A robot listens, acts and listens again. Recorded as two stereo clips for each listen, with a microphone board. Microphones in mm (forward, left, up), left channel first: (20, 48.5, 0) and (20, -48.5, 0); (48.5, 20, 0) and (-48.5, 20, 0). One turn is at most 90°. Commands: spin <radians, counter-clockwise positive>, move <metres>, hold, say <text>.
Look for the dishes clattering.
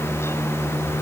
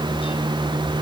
hold
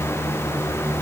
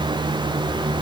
hold
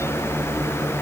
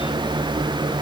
say I can't make out dishes clattering.